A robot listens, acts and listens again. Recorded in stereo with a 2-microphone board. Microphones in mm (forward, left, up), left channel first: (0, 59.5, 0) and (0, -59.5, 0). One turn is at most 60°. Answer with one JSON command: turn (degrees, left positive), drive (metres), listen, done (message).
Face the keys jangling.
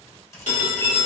{"turn": 25}
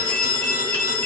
{"listen": true}
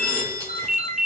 {"listen": true}
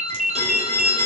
{"done": "I heard keys jangling, but can't make it out now. It was about straight ahead or 130° left."}